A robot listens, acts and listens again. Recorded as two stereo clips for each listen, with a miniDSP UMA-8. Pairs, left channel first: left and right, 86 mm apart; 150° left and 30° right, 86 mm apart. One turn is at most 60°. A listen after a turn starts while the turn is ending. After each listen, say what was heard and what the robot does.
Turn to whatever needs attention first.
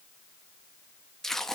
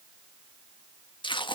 Keep listening.
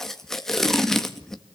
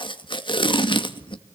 Keep listening.
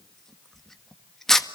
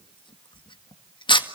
I can't make out anything urgent to turn to.